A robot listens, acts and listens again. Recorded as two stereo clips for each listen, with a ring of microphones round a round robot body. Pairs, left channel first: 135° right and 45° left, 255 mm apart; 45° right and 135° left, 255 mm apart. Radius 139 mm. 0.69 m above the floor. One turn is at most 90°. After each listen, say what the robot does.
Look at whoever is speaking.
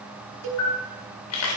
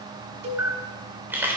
Keep listening.
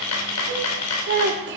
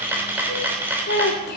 Facing the child speaking, 1 to 2 m away.